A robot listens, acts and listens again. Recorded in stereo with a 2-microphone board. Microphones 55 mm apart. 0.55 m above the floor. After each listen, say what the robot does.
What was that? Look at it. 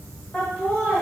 Turn 30° left.
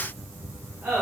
Turn 25° right.
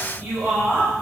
Turn 20° right.
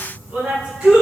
Facing the laughter.